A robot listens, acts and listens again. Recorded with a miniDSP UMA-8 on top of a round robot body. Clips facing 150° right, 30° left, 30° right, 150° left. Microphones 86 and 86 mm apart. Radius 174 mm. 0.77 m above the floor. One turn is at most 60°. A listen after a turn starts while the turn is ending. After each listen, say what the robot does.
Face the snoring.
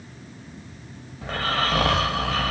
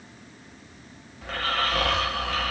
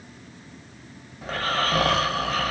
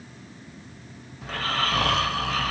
Turn 60° right.
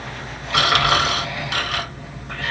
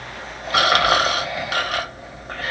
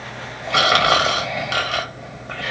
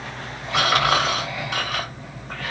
Turn 20° right.
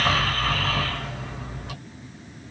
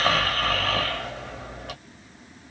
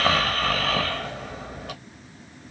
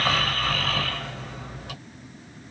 Facing the snoring.